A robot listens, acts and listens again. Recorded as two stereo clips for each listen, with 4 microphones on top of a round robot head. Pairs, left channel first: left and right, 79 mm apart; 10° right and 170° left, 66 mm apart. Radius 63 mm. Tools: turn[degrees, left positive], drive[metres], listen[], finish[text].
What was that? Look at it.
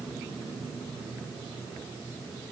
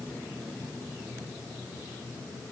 Action: listen[]
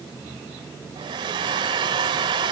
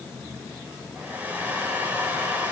Thought: The hair dryer: 115° right.
Action: turn[-115]
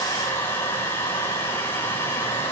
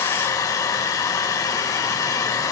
Thought: The hair dryer is now 25° left.
Action: turn[25]
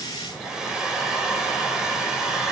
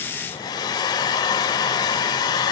Action: finish[Found it: a hair dryer, straight ahead, over 4 m away.]